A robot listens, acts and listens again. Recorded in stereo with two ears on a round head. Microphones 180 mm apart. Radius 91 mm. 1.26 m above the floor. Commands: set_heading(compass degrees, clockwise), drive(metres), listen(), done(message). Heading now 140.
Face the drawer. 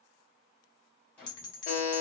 set_heading(110)
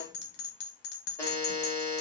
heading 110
listen()
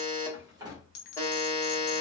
set_heading(130)
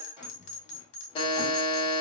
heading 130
set_heading(140)
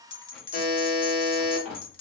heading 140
done("Facing the drawer, 1 to 2 m away.")